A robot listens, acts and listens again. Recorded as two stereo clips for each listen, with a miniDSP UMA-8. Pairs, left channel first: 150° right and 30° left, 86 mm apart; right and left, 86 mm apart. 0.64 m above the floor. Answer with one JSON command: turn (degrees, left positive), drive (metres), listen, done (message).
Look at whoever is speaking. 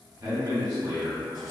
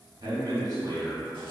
{"turn": 65}
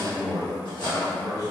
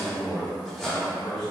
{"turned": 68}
{"done": "Found it: a man speaking, straight ahead, 1 to 2 m away."}